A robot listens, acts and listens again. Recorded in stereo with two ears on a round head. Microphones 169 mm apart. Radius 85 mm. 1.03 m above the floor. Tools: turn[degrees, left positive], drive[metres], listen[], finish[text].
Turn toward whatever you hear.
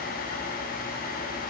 Action: listen[]
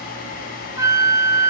Thought: The flute: about 20° right or 160° right.
Action: turn[-20]
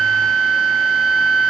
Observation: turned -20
Action: finish[Facing the flute, under 1 m away.]